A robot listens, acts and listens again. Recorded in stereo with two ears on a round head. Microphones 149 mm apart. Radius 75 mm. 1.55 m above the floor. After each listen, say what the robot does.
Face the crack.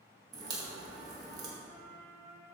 Turn 25° right.
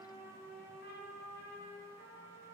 Keep listening.
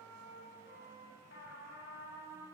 I heard a crack, but can't make it out now. It was about straight ahead or 130° right.